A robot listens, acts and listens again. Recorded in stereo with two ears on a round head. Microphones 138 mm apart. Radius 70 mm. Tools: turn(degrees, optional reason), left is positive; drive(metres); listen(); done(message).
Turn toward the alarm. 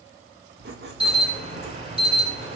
turn(degrees=-40, reason="The alarm: about 40° right or 140° right.")
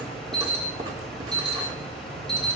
done("Facing the alarm.")